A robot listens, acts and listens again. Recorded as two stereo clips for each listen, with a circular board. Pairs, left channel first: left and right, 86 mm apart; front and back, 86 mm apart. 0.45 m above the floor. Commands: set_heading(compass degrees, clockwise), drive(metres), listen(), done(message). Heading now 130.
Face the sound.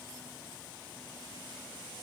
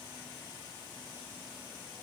listen()
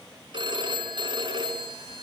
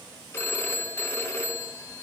set_heading(195)
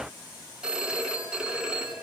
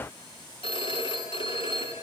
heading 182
set_heading(192)
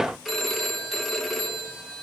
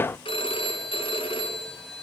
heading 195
done("Found it: a phone ringing, straight ahead, 2 to 4 m away.")